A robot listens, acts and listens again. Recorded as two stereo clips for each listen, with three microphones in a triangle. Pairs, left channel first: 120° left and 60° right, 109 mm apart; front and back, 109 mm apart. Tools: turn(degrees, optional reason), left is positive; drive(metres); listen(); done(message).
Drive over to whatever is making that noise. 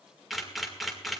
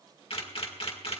turn(degrees=30, reason="The camera shutter: 30° left.")
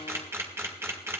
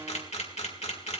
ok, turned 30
drive(metres=1.0)
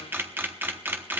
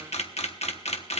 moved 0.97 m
turn(degrees=10, reason="The camera shutter is now 10° left.")
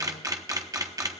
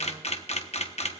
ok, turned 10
drive(metres=1.0)
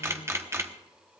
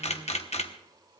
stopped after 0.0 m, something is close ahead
done("Arrived at the camera shutter, straight ahead.")